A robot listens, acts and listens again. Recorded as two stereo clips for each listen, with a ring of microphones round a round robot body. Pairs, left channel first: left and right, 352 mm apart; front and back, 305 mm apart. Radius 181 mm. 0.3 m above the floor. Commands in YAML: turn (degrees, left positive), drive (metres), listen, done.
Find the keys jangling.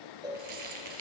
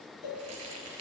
turn: -130
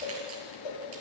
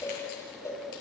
listen: true
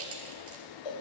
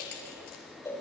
turn: -35
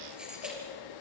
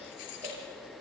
done: "Facing the keys jangling."